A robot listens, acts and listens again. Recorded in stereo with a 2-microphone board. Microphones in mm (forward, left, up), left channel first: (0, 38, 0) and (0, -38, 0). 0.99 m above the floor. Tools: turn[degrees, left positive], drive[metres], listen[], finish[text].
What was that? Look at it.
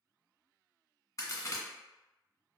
Thought: The crack: about 45° left or 135° left.
Action: turn[45]
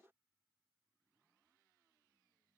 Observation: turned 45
Action: listen[]
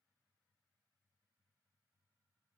Action: finish[I heard a crack, but can't make it out now. It was about straight ahead or 90° left.]